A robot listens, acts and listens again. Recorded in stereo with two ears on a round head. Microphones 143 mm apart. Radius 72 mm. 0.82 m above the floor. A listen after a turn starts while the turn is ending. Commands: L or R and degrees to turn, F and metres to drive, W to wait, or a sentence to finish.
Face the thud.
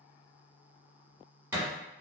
R15
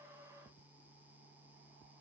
W
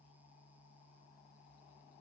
I heard a thud, but can't make it out now. It was about straight ahead or 150° right.